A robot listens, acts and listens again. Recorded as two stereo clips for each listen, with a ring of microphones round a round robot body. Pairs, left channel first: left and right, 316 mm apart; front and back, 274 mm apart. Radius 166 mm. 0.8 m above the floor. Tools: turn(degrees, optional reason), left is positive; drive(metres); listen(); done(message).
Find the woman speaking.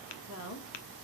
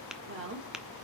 turn(degrees=135, reason="The woman speaking: 135° left.")
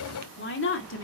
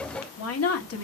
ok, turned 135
turn(degrees=40, reason="The woman speaking is now 40° left.")
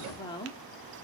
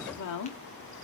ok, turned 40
turn(degrees=15, reason="The woman speaking is now 15° left.")
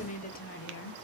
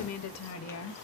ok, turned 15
turn(degrees=35, reason="The woman speaking is now 35° left.")
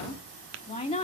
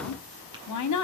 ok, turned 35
turn(degrees=15, reason="The woman speaking is now 15° left.")
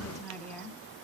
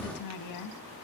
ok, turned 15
done("Found it: a woman speaking, straight ahead.")